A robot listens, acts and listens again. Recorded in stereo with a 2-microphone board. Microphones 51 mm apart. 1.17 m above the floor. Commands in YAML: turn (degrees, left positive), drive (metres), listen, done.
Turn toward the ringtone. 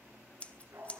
listen: true
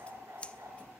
listen: true
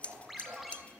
turn: 30
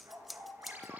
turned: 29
turn: -30
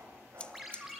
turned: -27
done: "Facing the ringtone, over 4 m away."